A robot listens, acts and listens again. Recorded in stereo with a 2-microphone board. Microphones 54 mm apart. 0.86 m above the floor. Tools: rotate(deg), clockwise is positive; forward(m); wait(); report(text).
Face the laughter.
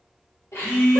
rotate(-65)
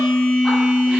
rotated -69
wait()
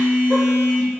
wait()
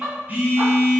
rotate(30)
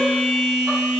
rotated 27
wait()
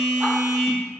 wait()
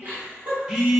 rotate(40)
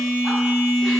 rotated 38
wait()
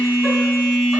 wait()
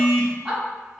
report("Found it: laughter, straight ahead, 2 to 4 m away.")